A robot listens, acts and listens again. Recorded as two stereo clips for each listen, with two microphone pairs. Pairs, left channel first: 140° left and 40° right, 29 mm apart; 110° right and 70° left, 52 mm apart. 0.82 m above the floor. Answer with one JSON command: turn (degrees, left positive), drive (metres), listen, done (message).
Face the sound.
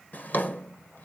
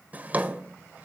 {"turn": 130}
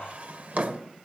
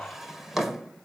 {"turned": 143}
{"turn": -15}
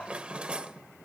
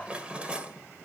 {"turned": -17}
{"done": "Found it: a drawer, straight ahead."}